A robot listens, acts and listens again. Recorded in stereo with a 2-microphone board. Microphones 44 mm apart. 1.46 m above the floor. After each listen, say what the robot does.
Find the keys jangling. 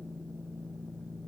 Keep listening.
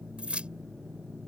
Turn 30° right.
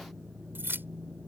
Turn 125° right.
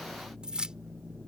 Turn 20° right.
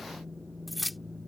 Found it: keys jangling, straight ahead.